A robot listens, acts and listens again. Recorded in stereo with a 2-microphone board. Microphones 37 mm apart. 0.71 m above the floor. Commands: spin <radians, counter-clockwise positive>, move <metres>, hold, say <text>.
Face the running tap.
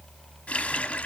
spin 0.61
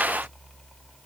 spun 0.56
hold
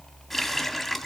say Found it: a running tap, straight ahead.